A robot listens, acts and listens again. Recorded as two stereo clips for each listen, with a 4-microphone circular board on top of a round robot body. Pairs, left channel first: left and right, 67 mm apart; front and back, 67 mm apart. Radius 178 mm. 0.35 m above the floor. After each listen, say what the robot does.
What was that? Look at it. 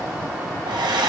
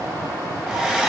Turn 100° right.
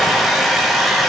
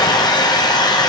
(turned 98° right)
Facing the hair dryer.